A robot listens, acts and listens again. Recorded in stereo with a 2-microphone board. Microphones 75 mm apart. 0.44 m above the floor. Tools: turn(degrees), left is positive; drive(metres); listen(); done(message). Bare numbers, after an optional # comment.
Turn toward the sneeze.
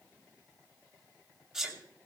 turn(-30)
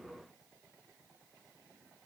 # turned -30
listen()
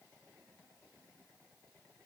done("I heard a sneeze, but can't make it out now. It was about 25° left or 145° right.")